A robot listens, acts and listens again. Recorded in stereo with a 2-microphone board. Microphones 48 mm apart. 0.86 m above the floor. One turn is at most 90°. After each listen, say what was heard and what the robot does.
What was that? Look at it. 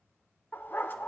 The dog barking: about 45° left or 135° left. Turn 45° left.
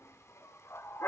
So it is at 85° left. Turn 85° left.
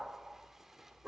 The dog barking is now 10° right. Turn 10° right.
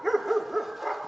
Found it: a dog barking, straight ahead, under 1 m away.